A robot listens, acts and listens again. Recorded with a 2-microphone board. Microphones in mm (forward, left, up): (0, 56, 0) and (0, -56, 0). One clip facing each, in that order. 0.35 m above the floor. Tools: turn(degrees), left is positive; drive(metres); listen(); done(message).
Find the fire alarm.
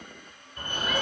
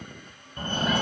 turn(degrees=-30)
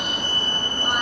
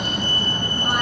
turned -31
done("Found it: a fire alarm, straight ahead.")